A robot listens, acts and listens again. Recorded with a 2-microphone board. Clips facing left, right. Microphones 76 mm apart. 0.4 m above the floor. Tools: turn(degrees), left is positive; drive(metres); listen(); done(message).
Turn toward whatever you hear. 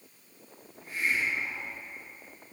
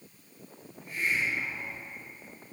turn(degrees=75)
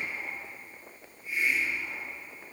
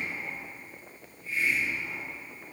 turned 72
turn(degrees=15)
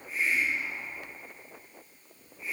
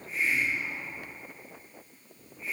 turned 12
done("Facing the hiss.")